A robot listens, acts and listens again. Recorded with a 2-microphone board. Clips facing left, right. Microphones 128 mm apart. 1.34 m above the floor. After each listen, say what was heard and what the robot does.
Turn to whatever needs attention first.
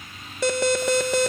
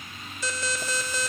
The alarm: about 70° left or 110° left. Turn 70° left.
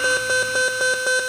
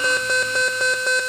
Found it: an alarm, straight ahead.